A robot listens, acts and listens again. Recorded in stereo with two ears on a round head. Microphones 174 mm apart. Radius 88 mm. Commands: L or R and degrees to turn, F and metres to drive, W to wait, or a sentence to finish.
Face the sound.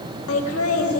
L90
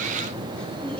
W
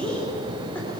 Found it: laughter, straight ahead, 2 to 4 m away.